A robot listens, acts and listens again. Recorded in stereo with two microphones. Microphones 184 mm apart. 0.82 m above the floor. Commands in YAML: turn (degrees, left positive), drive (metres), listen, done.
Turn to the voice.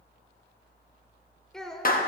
turn: 30
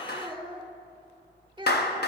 turn: -25
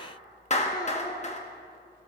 listen: true
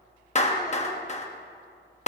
listen: true
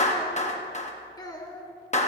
turn: 20
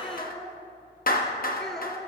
done: "Found it: a child speaking, straight ahead, 1 to 2 m away."